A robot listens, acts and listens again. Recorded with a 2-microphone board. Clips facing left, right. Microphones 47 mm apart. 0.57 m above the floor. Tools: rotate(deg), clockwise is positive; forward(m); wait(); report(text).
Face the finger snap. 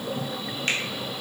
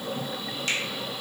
rotate(-40)
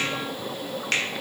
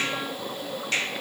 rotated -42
rotate(-90)
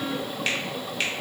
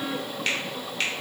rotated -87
report("Facing the finger snap, under 1 m away.")